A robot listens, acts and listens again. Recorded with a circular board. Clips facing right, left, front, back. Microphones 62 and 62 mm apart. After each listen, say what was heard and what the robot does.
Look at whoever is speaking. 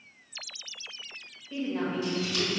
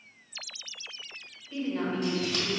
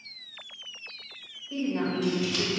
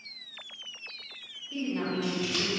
The woman speaking: 30° right. Turn 30° right.
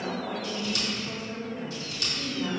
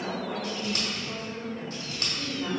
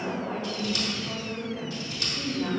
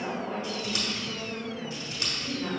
Facing the woman speaking, 1 to 2 m away.